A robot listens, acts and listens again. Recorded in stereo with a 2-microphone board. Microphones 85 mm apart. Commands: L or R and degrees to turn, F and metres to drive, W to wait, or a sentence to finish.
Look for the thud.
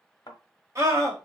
L55
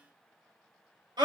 W
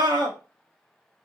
I heard a thud, but can't make it out now. It was about straight ahead or 70° left.